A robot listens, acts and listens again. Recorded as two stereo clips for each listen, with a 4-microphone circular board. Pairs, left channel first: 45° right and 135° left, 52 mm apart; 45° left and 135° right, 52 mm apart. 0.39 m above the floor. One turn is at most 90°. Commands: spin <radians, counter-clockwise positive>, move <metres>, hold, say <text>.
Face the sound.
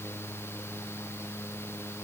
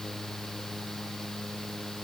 hold
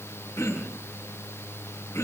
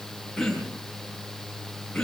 spin -0.61
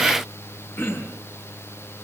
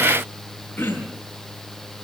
spin -0.17
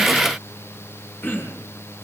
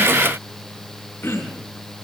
say Found it: throat clearing, straight ahead, over 4 m away.